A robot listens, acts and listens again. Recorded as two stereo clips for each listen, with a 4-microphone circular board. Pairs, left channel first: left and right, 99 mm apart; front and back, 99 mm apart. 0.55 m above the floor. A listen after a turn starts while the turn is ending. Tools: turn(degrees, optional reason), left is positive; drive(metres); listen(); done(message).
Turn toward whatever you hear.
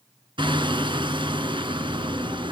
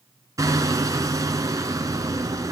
turn(degrees=-125, reason="The hammering: 125° right.")
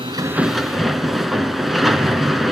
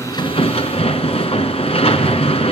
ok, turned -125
done("Facing the hammering, 1 to 2 m away.")